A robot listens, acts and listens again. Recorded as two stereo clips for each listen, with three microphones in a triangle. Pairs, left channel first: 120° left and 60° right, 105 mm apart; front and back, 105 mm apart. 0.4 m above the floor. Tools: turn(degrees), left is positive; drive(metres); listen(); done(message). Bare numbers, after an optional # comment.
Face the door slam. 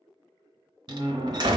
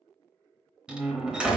# The door slam: 100° right.
turn(-100)
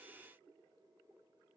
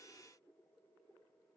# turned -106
# Nothing new. It was at 10° left.
turn(10)
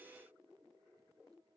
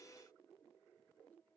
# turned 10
done("I heard a door slam from this way, but can't make it out now.")